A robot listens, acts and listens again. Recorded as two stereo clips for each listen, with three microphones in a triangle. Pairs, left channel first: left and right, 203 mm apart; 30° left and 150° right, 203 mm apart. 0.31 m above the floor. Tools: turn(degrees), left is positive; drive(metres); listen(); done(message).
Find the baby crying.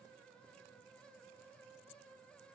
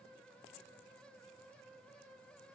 listen()
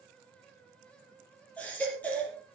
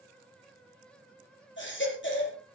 turn(degrees=10)
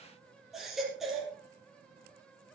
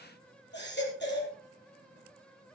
done("Found it: a baby crying, straight ahead.")